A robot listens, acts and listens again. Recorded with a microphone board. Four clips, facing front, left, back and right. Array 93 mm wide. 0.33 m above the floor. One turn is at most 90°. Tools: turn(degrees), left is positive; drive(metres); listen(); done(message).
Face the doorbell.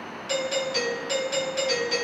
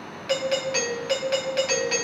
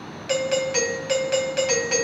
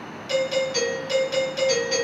turn(degrees=90)
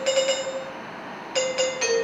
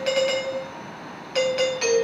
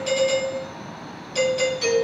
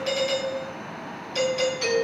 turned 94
turn(degrees=40)
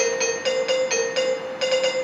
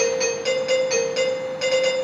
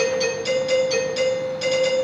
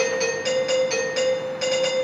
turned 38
done("Facing the doorbell.")